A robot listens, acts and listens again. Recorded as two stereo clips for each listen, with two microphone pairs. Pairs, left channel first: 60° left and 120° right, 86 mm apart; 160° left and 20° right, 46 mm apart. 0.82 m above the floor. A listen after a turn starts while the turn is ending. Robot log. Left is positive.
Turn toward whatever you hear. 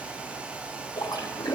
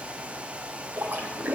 note: The splash: 30° left.
cmd yaw +30
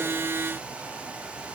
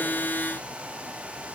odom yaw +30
end: I heard a splash from this way, but can't make it out now.